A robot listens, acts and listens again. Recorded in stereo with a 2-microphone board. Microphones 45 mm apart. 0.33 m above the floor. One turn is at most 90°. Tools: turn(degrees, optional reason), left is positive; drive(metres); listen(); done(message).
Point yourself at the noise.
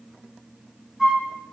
turn(degrees=-30)
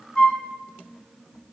turn(degrees=20, reason="So it is at 20° left.")
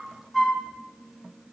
done("Found it: a flute, straight ahead, 2 to 4 m away.")